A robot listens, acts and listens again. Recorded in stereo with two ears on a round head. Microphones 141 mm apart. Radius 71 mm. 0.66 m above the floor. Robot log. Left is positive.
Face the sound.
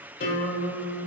note: The guitar: about 60° left or 120° left.
cmd yaw +60
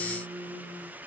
end: Found it: a guitar, straight ahead.